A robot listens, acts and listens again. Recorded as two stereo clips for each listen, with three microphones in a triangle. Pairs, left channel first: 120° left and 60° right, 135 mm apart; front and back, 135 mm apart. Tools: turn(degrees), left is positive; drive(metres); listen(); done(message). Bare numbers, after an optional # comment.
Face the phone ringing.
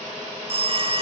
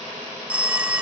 # The phone ringing: 100° right.
turn(-100)
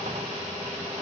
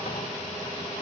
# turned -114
# Nothing new. It was at 15° left.
turn(15)
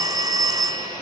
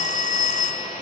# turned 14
done("Facing the phone ringing.")